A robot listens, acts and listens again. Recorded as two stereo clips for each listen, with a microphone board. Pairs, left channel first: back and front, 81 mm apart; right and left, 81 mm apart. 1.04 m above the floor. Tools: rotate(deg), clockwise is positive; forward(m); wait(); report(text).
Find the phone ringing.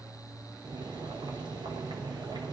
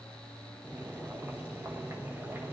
wait()
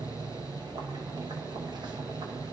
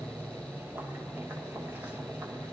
wait()
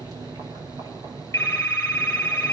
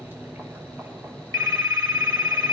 rotate(-120)
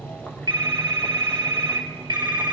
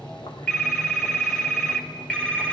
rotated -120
rotate(15)
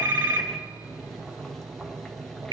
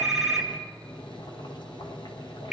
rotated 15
report("Facing the phone ringing, 1 to 2 m away.")